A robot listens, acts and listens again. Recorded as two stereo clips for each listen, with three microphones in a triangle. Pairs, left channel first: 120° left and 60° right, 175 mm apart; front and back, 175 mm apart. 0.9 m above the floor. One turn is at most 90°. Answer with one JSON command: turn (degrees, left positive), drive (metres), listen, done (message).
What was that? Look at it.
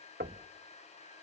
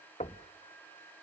{"turn": -50}
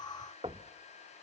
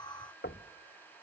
{"done": "Found it: knocking, straight ahead, under 1 m away."}